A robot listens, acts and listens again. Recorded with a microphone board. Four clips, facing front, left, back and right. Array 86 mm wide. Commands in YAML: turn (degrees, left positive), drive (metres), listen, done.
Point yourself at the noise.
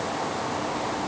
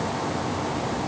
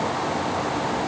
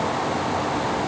listen: true
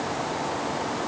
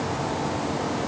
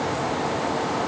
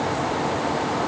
listen: true
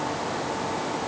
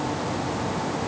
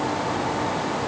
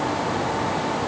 done: "I can't make out anything."